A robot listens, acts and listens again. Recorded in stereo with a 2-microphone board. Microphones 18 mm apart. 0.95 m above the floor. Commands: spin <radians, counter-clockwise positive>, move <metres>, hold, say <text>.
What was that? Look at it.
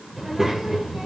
spin -0.52
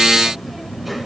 spin -0.17
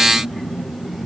spin -0.17
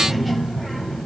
say Facing the child speaking.